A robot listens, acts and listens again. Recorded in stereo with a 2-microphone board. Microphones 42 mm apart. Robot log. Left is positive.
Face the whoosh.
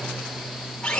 cmd idle
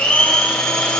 cmd idle
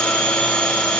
end: I can't make out a whoosh to turn to.